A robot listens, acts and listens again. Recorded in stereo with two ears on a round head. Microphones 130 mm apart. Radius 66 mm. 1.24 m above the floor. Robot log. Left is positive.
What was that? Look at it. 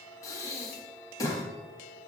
note: The breathing: about 25° left or 155° left.
cmd yaw +25
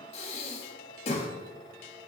note: So it is at 130° left.
cmd yaw +130
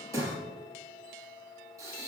note: The breathing is now 25° right.
cmd yaw -25
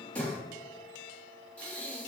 note: The breathing is now 10° left.
cmd yaw +10
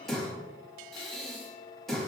end: Facing the breathing, 1 to 2 m away.